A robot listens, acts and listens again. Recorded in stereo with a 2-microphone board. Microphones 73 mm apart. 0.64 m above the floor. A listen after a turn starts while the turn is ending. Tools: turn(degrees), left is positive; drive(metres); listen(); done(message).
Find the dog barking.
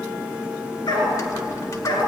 turn(degrees=75)
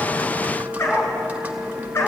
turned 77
turn(degrees=35)
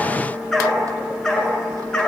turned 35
turn(degrees=10)
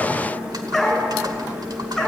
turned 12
done("Facing the dog barking, 2 to 4 m away.")